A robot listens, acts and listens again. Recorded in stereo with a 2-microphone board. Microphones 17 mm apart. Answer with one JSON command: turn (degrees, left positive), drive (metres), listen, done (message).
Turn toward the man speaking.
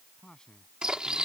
{"turn": 35}
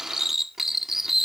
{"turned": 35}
{"listen": true}
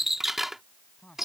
{"turn": 105}
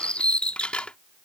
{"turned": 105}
{"listen": true}
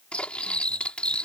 {"listen": true}
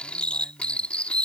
{"done": "Facing where the man speaking came from. I can't hear it now."}